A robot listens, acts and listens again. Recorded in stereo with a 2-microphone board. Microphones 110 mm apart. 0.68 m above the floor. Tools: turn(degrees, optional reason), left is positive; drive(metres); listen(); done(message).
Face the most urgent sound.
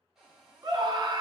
turn(degrees=-40, reason="The scream: about 40° right or 140° right.")
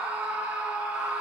turn(degrees=-10, reason="So it is at 10° right.")
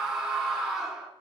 done("Found it: a scream, straight ahead, 1 to 2 m away.")